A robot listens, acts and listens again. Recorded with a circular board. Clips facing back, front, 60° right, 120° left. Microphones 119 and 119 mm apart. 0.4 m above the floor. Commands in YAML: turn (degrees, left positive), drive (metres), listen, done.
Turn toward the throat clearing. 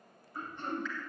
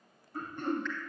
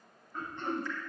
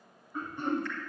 turn: 40
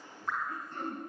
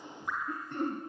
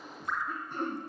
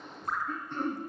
turn: 20
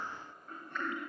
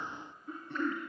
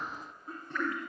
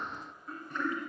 done: "Found it: throat clearing, straight ahead."